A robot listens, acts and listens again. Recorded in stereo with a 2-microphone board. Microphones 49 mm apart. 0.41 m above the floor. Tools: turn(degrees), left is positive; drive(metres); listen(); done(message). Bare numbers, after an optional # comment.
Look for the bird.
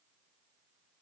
listen()
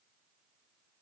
listen()
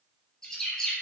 turn(30)
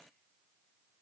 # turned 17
listen()
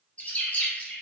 # So it is at 150° left.
turn(150)
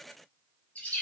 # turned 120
# The bird is now 30° left.
turn(30)
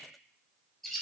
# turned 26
done("Facing the bird.")